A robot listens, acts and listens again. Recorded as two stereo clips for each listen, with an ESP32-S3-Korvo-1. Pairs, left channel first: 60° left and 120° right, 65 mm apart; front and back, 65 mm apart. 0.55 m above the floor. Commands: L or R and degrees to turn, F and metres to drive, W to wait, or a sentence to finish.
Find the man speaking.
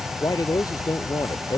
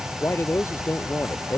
L50
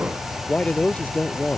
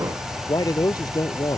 R10
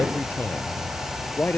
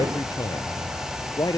Found it: a man speaking, straight ahead.